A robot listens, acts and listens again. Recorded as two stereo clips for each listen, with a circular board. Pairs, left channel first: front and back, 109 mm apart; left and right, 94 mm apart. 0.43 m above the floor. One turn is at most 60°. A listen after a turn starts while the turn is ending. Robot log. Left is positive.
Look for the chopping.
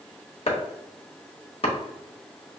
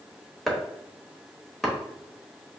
end: Found it: chopping, straight ahead, 1 to 2 m away.